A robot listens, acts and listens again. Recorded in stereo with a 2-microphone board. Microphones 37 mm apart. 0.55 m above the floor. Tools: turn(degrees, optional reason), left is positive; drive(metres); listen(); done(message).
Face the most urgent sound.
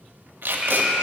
turn(degrees=-25, reason="The alarm: about 25° right or 155° right.")
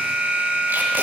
turn(degrees=-125, reason="So it is at 125° right.")
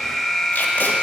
done("Found it: an alarm, straight ahead, under 1 m away.")